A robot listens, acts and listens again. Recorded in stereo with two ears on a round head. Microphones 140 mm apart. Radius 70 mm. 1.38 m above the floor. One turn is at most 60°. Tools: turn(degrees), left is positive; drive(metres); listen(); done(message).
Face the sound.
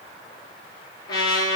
turn(degrees=25)
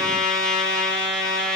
done("Found it: a trumpet, straight ahead, 2 to 4 m away.")